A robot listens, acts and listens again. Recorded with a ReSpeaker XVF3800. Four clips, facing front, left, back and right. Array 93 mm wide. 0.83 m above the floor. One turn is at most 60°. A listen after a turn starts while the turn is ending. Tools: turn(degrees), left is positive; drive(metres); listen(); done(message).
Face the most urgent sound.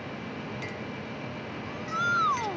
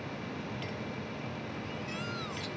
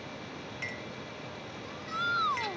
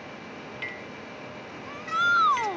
turn(degrees=-60)
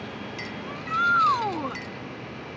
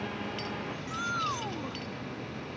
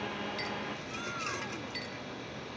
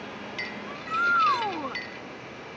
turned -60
turn(degrees=-30)
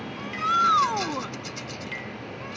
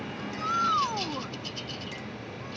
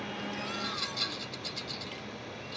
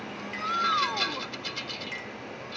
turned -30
turn(degrees=10)
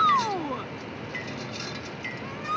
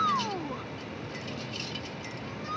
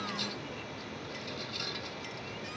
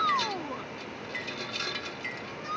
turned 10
done("Facing the shout.")